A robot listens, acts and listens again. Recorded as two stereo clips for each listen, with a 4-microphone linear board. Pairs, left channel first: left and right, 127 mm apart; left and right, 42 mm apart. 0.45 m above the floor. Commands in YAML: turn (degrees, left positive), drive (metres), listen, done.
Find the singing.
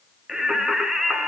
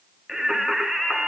turn: -30
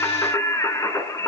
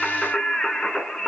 turn: 25
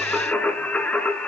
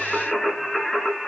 turn: 10
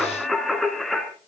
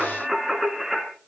done: "Facing the singing, 2 to 4 m away."